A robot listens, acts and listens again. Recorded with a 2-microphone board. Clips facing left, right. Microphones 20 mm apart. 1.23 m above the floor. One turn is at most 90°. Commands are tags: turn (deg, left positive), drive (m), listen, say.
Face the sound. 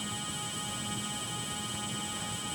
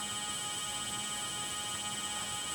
<listen/>
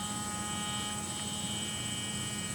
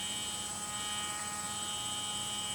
<listen/>
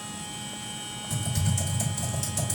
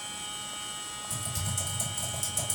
<turn deg="20"/>
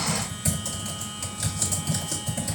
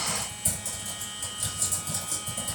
<turn deg="90"/>
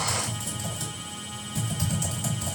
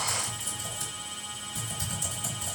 <turn deg="40"/>
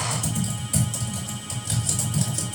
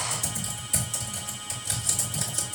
<say>Facing the typing on a keyboard, 2 to 4 m away.</say>